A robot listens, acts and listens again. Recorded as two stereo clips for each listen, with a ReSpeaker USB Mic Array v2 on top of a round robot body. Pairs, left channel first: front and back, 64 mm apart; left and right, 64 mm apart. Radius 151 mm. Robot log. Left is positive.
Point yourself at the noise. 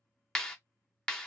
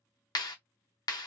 note: The clap: 80° left.
cmd yaw +80
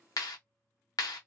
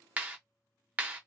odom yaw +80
note: The clap is now 20° right.
cmd yaw -20
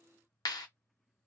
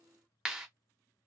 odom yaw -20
note: The clap is now 10° right.
cmd yaw -10
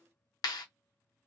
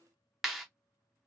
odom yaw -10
end: Found it: a clap, straight ahead.